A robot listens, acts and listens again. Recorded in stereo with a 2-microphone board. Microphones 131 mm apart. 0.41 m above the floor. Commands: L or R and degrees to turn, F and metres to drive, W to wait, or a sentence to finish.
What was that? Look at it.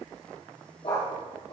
L45
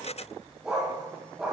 R10
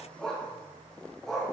Found it: a dog barking, straight ahead.